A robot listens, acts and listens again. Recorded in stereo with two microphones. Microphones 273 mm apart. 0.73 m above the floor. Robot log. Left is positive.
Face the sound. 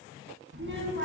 note: The child speaking: about 45° right or 135° right.
cmd yaw -45
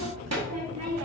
note: So it is at 85° right.
cmd yaw -85
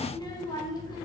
note: The child speaking is now 15° left.
cmd yaw +15
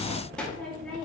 end: Found it: a child speaking, straight ahead, under 1 m away.